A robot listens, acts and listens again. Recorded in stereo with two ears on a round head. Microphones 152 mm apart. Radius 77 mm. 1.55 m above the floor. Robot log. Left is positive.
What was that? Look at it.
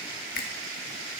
note: The finger snap: about 55° left or 125° left.
cmd yaw +55
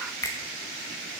note: So it is at 20° left.
cmd yaw +20
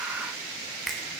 end: Found it: a finger snap, straight ahead, 1 to 2 m away.